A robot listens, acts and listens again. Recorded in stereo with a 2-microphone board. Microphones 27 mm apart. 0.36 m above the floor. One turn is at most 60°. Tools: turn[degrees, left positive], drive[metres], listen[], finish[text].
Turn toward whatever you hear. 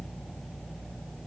Action: listen[]
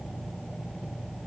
Action: listen[]
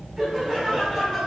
Thought: The laughter: about 20° right or 160° right.
Action: turn[-20]
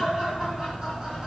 Thought: The laughter: about 35° right or 145° right.
Action: turn[-35]
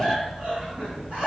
Thought: So it is at 120° right.
Action: turn[-60]
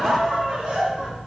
Thought: The laughter is now 45° right.
Action: turn[-45]
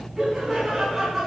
Action: finish[Found it: laughter, straight ahead, 2 to 4 m away.]